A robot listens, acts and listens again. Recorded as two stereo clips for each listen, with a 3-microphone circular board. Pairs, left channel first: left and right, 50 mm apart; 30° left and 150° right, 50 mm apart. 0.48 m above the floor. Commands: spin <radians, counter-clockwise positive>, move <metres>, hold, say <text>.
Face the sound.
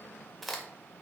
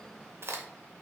spin 3.14
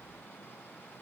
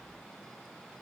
say I heard a crack from this way, but can't make it out now.